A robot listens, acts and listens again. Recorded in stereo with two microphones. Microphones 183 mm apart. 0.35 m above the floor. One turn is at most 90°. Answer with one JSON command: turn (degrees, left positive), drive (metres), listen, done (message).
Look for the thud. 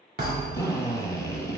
{"turn": -65}
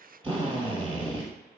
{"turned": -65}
{"listen": true}
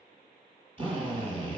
{"done": "I heard a thud, but can't make it out now. It was about straight ahead or 50° right."}